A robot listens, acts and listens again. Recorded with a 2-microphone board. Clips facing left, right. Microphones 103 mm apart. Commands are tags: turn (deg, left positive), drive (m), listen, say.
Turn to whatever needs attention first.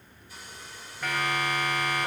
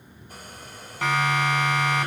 <turn deg="-90"/>
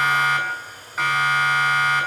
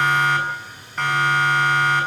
<say>Facing the siren.</say>